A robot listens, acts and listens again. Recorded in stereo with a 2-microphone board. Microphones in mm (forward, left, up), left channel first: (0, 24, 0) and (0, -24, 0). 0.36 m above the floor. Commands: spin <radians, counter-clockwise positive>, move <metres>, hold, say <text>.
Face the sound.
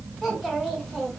spin 0.52
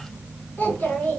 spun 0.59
spin 2.27
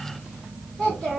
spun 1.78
spin 0.35
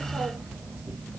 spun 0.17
spin 0.17
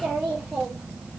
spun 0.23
say Found it: a child speaking, straight ahead, 2 to 4 m away.